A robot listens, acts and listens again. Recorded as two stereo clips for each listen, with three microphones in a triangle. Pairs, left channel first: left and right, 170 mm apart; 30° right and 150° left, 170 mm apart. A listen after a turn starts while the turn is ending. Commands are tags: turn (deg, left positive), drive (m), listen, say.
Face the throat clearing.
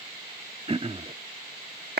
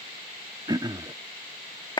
<turn deg="-140"/>
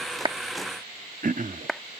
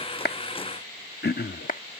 <turn deg="-50"/>
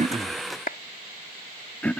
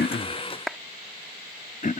<say>Facing the throat clearing.</say>